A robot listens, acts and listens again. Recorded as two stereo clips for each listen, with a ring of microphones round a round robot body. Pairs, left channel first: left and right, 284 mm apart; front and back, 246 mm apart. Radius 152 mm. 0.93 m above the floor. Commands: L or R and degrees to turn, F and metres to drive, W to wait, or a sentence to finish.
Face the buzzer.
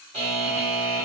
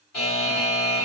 R20
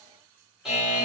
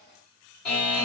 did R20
Found it: a buzzer, straight ahead, 1 to 2 m away.